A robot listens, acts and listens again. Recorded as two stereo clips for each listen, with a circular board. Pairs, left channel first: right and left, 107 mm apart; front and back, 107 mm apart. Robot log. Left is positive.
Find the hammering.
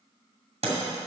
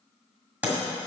note: The hammering: 105° left.
cmd yaw +105
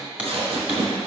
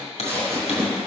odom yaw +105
note: The hammering is now 10° left.
cmd yaw +10
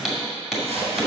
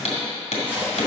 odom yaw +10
end: Facing the hammering.